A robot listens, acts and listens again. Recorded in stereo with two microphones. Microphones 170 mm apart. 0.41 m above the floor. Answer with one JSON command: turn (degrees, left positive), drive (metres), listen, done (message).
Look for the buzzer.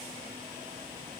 {"listen": true}
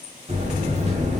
{"turn": -40}
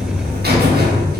{"turn": -95}
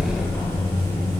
{"turn": 15}
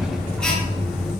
{"done": "Facing the buzzer, under 1 m away."}